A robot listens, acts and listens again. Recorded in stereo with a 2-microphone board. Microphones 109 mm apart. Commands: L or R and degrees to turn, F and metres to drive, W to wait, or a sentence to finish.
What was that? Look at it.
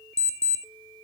L70
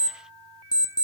L40
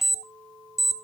Found it: an alarm clock, straight ahead, under 1 m away.